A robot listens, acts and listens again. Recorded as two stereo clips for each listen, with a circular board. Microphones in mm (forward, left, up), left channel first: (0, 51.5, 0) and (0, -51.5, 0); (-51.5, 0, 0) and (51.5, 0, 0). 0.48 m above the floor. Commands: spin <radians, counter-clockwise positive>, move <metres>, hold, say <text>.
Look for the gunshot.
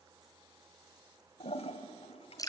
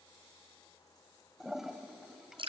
hold
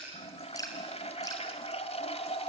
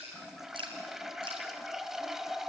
hold
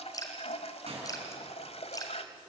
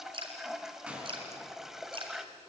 spin -1.40
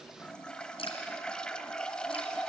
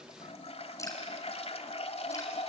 say I heard a gunshot from this way, but can't make it out now.